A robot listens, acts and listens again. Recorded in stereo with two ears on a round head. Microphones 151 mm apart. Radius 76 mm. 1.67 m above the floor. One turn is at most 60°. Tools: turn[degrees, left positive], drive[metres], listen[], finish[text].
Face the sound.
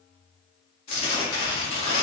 Thought: The tearing paper: about 35° left or 145° left.
Action: turn[35]
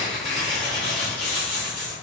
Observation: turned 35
Action: finish[Facing the tearing paper, 1 to 2 m away.]